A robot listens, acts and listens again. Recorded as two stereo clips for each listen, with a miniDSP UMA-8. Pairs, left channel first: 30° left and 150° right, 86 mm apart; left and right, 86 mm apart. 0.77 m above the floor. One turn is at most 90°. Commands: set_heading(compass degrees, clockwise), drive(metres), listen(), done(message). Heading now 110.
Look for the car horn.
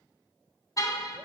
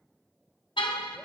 set_heading(35)
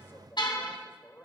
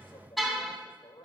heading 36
done("Facing the car horn.")